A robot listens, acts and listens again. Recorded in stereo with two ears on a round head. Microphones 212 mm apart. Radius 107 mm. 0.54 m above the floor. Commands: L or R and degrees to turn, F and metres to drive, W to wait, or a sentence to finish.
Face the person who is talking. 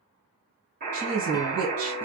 R65
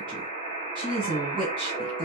R20
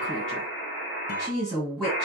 Facing the woman speaking.